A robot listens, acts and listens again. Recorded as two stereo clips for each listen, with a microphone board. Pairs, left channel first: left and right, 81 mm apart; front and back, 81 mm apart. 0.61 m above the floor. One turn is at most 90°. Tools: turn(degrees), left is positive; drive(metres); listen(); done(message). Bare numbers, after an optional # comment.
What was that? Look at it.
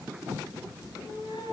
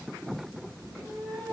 # The cat meowing: 70° left.
turn(70)
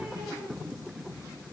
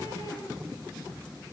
# The cat meowing is now 20° right.
turn(-20)
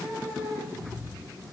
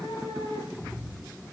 done("Found it: a cat meowing, straight ahead, over 4 m away.")